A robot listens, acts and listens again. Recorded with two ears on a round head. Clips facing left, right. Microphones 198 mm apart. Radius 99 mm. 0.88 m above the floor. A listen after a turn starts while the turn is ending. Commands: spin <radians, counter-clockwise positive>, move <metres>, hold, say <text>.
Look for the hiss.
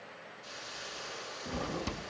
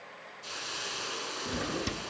spin -1.13
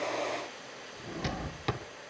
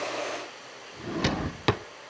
say Facing the hiss, 2 to 4 m away.